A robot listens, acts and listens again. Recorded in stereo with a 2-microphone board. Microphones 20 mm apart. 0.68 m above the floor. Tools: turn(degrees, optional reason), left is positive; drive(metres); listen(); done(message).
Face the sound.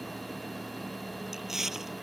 turn(degrees=-20, reason="The chewing: about 20° right or 160° right.")
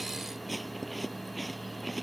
done("Facing the chewing.")